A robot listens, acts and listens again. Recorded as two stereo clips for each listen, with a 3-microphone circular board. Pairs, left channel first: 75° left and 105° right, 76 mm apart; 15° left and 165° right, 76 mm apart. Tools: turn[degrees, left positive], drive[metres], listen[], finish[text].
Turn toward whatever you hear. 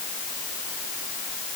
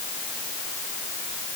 Action: listen[]
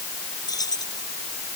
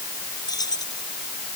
Thought: The keys jangling: 45° left.
Action: turn[45]
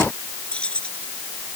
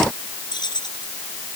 Action: finish[Found it: keys jangling, straight ahead.]